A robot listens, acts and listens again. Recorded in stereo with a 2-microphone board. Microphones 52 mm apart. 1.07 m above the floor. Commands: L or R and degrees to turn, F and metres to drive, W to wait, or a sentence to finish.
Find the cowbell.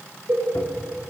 R55
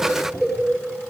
Facing the cowbell.